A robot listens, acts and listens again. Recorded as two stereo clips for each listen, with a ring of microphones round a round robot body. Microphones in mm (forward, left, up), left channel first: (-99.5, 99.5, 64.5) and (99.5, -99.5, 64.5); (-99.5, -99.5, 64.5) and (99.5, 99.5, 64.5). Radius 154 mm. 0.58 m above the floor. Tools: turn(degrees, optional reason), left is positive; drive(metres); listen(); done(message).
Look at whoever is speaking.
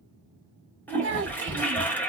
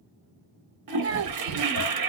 done("Found it: a child speaking, straight ahead, under 1 m away.")